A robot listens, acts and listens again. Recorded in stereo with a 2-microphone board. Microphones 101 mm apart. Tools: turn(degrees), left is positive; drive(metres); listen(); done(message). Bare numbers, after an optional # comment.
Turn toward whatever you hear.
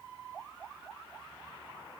listen()
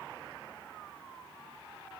listen()
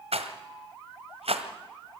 turn(-90)
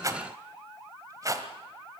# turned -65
# So it is at 35° right.
turn(-35)
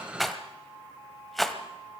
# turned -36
done("Found it: a rattle, straight ahead, 1 to 2 m away.")